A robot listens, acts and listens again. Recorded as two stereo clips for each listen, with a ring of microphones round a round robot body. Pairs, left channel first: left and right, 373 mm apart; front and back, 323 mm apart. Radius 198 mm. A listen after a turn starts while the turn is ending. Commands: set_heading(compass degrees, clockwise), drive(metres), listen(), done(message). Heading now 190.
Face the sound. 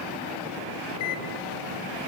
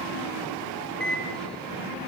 set_heading(105)
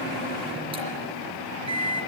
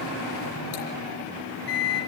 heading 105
set_heading(120)
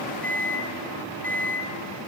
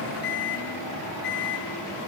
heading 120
done("Facing the microwave, over 4 m away.")